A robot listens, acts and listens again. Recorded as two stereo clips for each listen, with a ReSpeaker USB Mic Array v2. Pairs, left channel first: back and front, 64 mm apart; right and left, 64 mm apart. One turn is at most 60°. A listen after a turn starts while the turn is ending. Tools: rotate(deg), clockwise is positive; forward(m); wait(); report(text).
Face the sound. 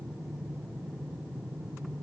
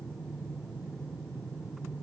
wait()
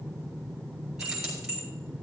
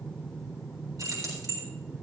rotate(-60)
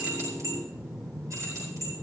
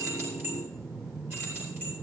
rotate(-40)
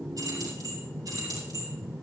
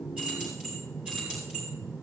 rotate(-15)
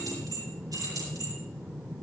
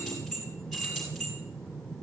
report("Facing the keys jangling, over 4 m away.")